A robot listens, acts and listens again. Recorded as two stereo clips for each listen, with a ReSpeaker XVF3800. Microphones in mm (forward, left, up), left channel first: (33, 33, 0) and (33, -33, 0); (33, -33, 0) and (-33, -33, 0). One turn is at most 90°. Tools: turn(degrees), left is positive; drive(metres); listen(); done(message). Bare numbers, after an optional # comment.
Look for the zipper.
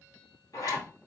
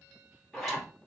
# The zipper: 85° left.
turn(85)
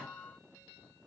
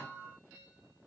listen()
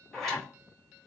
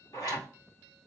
done("Facing the zipper, 2 to 4 m away.")